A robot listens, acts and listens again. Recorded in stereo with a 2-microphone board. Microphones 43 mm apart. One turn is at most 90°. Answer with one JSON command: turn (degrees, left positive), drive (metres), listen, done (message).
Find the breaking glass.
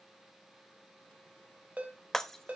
{"turn": 30}
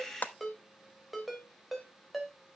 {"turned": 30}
{"turn": 90}
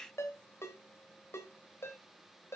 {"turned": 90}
{"turn": 50}
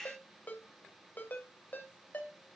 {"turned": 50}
{"done": "Facing where the breaking glass came from. I can't hear it now."}